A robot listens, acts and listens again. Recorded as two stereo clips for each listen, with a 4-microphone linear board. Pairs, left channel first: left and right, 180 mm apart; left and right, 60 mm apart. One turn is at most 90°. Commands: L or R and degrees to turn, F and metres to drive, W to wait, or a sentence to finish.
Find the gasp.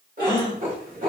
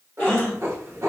L25
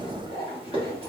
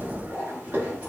W
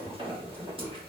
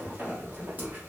I heard a gasp, but can't make it out now. It was about straight ahead or 130° left.